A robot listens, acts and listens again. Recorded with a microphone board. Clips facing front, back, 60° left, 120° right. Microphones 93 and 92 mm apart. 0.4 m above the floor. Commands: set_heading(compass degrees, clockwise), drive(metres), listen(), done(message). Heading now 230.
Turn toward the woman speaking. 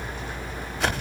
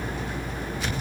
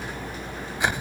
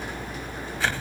listen()
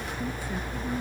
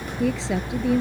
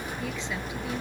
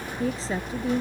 set_heading(45)
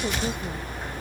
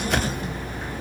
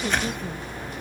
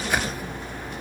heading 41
listen()
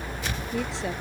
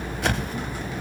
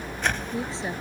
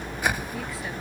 listen()
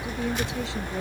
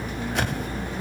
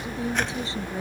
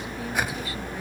done("Found it: a woman speaking, straight ahead.")